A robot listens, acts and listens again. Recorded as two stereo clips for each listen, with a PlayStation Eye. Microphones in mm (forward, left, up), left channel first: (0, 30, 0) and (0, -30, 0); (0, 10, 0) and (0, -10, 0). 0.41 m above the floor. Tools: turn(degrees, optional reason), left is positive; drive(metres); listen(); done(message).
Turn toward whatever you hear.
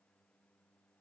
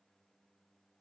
listen()
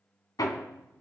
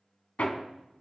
turn(degrees=90)
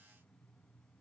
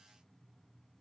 listen()
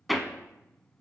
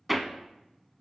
done("Found it: hammering, straight ahead, 1 to 2 m away.")